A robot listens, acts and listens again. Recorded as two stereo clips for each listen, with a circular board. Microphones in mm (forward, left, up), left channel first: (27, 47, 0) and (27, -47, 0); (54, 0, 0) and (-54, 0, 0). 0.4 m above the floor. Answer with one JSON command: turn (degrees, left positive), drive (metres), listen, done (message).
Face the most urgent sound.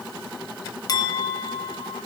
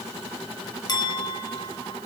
{"listen": true}
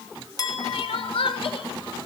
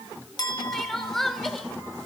{"turn": 85}
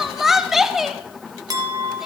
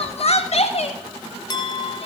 {"done": "Facing the crying, under 1 m away."}